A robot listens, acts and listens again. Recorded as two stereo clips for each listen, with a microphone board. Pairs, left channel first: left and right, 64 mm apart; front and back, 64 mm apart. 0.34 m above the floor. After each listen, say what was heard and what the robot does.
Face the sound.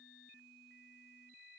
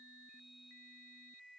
Keep listening.
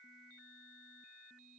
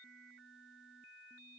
Keep listening.
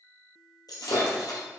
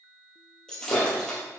The breaking glass: 80° left. Turn 80° left.
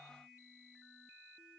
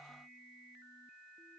I heard breaking glass from this way, but can't make it out now.